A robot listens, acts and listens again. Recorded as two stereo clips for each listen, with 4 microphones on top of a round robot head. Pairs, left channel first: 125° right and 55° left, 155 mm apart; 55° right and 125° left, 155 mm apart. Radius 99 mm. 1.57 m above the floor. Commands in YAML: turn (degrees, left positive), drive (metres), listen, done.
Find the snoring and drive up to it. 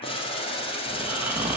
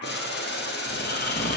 turn: -25
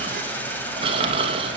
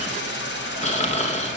drive: 1.0
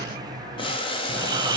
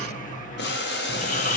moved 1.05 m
turn: -15
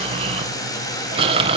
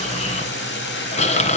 drive: 1.0
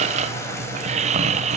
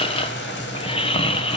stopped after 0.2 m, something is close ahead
done: "I am next to the snoring."